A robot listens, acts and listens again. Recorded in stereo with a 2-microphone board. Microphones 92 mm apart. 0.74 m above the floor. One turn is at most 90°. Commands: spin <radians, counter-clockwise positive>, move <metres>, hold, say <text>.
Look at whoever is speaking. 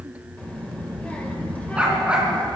spin 0.26
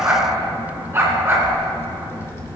spin 1.57
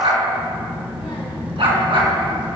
spin 1.57
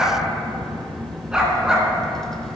say Found it: a child speaking, straight ahead.